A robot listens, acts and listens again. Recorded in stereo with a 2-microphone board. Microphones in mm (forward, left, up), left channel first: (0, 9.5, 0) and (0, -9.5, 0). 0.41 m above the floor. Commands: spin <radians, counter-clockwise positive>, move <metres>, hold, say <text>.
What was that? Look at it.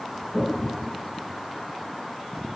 spin 0.61
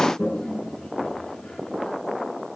spin 1.83
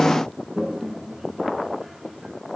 spin -0.52
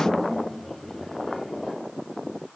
spin 0.17
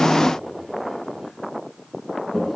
say Facing the toilet flushing.